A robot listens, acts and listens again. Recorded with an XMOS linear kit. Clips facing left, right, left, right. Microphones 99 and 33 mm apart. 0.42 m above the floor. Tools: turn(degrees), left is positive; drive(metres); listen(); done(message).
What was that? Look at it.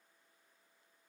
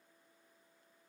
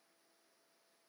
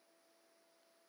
listen()
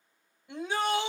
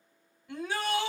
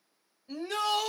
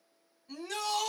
turn(degrees=25)
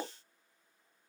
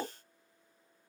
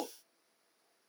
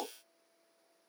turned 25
done("Found it: a shout, straight ahead.")